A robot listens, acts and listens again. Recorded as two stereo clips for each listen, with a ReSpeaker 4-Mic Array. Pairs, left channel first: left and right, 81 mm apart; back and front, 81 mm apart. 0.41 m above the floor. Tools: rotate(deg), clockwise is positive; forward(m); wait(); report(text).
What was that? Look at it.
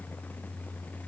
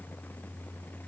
wait()
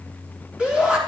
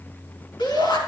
rotate(165)
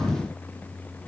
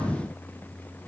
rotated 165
wait()
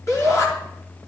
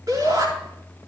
rotate(-45)
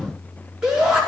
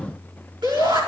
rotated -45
rotate(10)
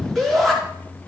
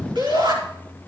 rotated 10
report("Found it: a shout, straight ahead.")